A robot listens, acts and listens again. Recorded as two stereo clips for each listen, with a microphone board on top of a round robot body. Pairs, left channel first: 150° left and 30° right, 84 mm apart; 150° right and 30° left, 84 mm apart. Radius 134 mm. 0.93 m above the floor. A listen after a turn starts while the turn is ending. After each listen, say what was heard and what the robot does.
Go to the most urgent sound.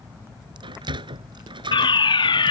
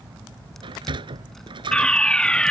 The fire alarm: 130° left. Turn 130° left.
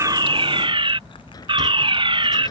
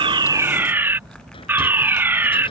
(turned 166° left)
The fire alarm is now 35° right. Turn 35° right.
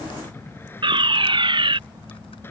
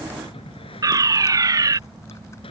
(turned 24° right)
The fire alarm is now 15° right. Turn 15° right.
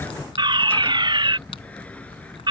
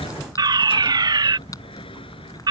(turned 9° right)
Drive 1.0 m forward.
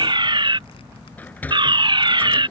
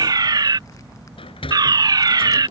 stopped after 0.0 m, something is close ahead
Blocked. The fire alarm is further on, straight ahead.